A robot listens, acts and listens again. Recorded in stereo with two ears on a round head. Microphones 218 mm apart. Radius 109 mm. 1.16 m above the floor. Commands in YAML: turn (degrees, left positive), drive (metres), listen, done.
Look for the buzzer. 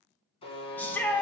turn: 25
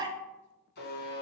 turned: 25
turn: 130
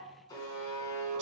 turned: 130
turn: 20
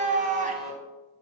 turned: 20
done: "Found it: a buzzer, straight ahead."